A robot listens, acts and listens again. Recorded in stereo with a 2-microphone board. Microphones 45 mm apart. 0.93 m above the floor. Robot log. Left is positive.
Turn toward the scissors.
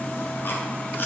cmd idle
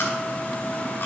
cmd idle
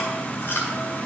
end: I can't make out scissors to turn to.